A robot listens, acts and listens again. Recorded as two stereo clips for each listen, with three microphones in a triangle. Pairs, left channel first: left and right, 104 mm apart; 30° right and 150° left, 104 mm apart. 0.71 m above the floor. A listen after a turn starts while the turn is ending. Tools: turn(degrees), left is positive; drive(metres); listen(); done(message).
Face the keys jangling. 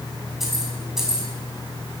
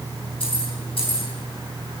turn(degrees=-10)
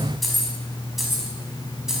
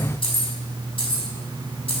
done("Facing the keys jangling, over 4 m away.")